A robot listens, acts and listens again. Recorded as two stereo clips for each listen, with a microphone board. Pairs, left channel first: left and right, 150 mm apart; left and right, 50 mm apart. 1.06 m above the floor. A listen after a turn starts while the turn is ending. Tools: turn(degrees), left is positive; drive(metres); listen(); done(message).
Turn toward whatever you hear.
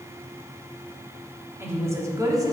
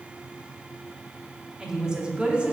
turn(degrees=-25)
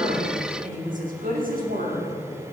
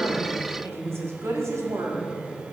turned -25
turn(degrees=-110)
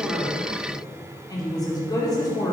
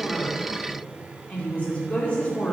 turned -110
turn(degrees=25)
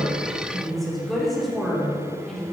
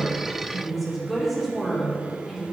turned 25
done("Found it: a woman speaking, straight ahead.")